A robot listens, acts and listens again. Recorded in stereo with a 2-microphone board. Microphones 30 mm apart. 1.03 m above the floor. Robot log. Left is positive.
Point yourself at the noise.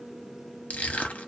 note: The crushing: about 65° left or 115° left.
cmd yaw +65
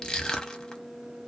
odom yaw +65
note: So it is at 25° left.
cmd yaw +25
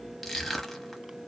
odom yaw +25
end: Facing the crushing.